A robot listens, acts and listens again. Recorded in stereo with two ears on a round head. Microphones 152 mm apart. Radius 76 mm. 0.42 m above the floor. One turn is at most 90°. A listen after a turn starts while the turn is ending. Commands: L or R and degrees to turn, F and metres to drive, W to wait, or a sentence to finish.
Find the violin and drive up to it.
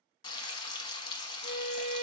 R30
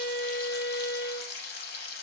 L25
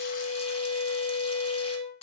F1.0
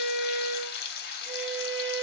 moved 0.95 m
F1.0
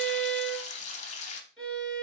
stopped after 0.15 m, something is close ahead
I am next to the violin.